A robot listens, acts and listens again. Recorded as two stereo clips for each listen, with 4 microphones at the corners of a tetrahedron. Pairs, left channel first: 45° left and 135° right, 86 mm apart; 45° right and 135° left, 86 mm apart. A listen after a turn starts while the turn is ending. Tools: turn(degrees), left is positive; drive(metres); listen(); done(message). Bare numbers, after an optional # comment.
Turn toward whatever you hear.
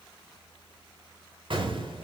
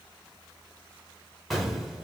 # The explosion: 135° right.
turn(-135)
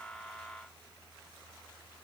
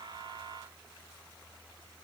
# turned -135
done("Facing where the explosion came from. I can't hear it now.")